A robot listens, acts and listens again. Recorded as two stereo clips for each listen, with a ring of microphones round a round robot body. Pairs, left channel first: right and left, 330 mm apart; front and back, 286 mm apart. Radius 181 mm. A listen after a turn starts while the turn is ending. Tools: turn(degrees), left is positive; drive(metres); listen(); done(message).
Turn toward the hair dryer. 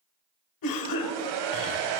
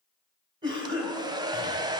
turn(degrees=105)
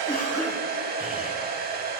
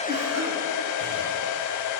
turn(degrees=25)
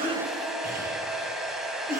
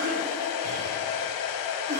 done("Facing the hair dryer, under 1 m away.")